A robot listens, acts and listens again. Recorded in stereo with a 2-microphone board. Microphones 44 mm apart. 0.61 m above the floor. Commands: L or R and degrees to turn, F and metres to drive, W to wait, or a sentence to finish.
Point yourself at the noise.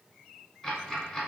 L30
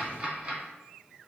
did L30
R30
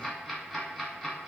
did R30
Facing the ticking, under 1 m away.